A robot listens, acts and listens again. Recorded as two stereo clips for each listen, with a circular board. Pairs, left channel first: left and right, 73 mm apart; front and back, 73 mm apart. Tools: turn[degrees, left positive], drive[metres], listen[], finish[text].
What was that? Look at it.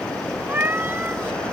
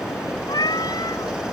Thought: The cat meowing: 30° right.
Action: turn[-30]
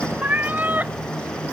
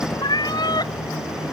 Thought: The cat meowing is now 25° right.
Action: turn[-25]
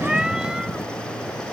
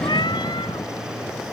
Action: listen[]
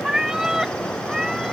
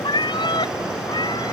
Thought: The cat meowing is now 10° right.
Action: turn[-10]
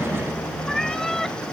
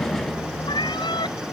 Action: finish[Facing the cat meowing.]